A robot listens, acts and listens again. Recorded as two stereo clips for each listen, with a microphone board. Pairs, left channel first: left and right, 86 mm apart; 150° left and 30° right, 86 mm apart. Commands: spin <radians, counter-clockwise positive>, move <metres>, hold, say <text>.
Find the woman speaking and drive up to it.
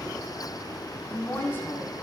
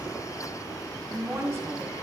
spin 0.44
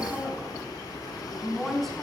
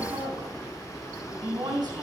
move 1.0
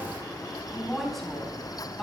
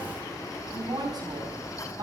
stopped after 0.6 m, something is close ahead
say Blocked. The woman speaking is further on, straight ahead.